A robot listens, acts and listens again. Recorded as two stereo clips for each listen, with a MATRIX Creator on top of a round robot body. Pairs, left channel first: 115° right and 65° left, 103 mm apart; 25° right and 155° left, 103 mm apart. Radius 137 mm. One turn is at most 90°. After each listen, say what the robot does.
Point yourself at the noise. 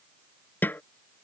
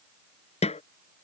Turn 40° right.
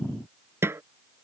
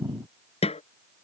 Found it: a snare drum, straight ahead.